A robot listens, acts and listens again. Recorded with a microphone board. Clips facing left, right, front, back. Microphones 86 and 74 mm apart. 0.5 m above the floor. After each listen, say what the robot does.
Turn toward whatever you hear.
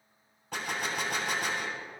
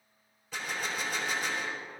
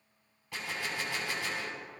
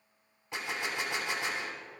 Turn 115° left.
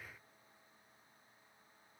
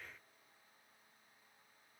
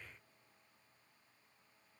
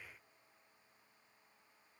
Facing where the gunshot came from. I can't hear it now.